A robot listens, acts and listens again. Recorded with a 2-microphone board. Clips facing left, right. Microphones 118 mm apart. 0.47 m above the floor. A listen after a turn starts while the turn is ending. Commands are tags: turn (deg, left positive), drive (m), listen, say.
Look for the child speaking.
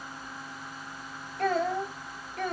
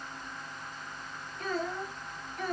<turn deg="60"/>
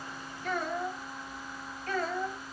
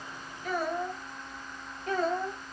<turn deg="-25"/>
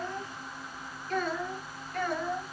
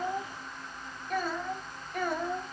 <turn deg="-15"/>
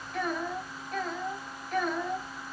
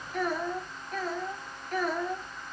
<say>Facing the child speaking, 2 to 4 m away.</say>